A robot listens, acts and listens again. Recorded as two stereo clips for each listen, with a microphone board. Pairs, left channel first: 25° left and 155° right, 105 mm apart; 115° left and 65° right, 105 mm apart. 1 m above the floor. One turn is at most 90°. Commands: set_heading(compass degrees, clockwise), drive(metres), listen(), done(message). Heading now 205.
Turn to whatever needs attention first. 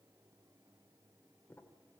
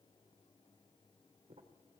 listen()
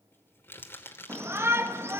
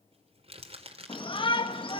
set_heading(115)
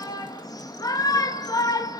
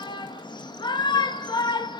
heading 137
set_heading(62)
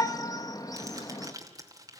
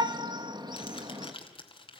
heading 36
set_heading(61)
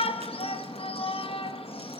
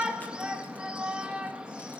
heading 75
set_heading(65)
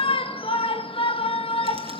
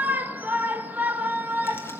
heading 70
done("Facing the shout, 1 to 2 m away.")